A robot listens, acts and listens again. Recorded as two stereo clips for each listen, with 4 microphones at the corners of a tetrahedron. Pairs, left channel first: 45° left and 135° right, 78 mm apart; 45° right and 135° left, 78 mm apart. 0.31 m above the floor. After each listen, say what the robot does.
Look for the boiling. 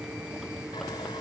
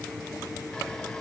Keep listening.
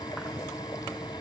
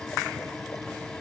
Keep listening.
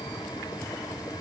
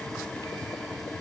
I can't make out boiling to turn to.